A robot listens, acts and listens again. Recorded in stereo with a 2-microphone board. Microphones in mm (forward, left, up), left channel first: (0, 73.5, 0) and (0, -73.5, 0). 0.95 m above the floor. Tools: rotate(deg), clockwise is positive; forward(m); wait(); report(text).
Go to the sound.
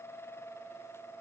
wait()
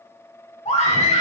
rotate(-45)
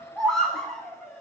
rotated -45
forward(1.0)
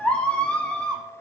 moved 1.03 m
rotate(-10)
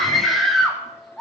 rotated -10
forward(1.0)
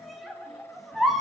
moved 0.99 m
forward(1.0)
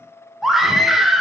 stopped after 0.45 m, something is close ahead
report("I am next to the scream.")